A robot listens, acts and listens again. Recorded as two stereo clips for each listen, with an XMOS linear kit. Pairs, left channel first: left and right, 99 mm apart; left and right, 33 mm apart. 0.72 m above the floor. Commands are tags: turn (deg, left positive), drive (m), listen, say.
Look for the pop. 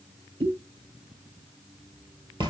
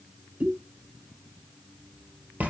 <turn deg="-70"/>
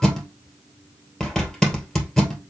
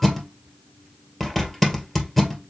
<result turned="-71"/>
<listen/>
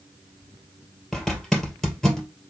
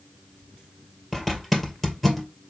<say>I heard a pop, but can't make it out now. It was about straight ahead or 35° right.</say>